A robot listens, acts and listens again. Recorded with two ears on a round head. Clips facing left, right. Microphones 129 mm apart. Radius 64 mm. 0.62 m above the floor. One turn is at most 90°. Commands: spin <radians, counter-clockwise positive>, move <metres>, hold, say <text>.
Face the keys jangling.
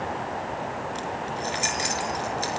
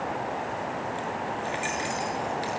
spin 0.87
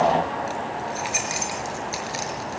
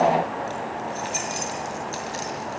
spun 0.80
spin 0.17
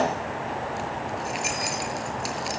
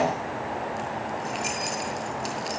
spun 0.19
say Found it: keys jangling, straight ahead, over 4 m away.